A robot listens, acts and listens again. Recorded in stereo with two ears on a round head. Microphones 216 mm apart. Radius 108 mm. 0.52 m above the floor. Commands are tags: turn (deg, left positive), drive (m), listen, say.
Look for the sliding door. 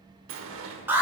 <turn deg="-60"/>
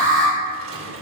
<turn deg="-60"/>
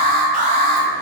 <listen/>
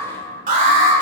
<listen/>
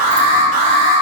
<say>Facing where the sliding door came from. I can't hear it now.</say>